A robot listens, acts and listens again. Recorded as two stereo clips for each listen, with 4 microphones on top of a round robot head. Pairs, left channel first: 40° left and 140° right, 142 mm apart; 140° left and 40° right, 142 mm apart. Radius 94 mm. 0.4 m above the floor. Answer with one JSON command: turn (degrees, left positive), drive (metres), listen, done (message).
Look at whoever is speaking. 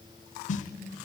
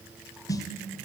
{"listen": true}
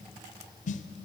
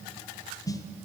{"listen": true}
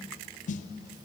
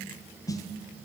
{"done": "I can't make out anyone speaking to turn to."}